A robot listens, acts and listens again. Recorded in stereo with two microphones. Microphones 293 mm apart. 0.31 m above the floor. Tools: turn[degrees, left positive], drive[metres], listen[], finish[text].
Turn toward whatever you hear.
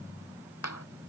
Thought: The clap: about 65° left or 115° left.
Action: turn[65]
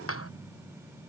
Thought: So it is at 50° left.
Action: turn[50]
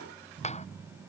Action: listen[]
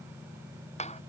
Thought: The clap is now 20° left.
Action: turn[20]
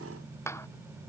Thought: The clap is now 10° left.
Action: turn[10]
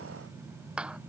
Action: finish[Found it: a clap, straight ahead.]